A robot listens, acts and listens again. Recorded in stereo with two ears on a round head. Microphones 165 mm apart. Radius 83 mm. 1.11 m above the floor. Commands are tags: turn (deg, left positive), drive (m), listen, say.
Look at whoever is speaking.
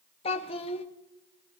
<turn deg="30"/>
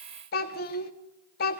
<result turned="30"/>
<turn deg="110"/>
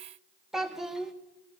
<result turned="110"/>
<say>Found it: a child speaking, straight ahead, under 1 m away.</say>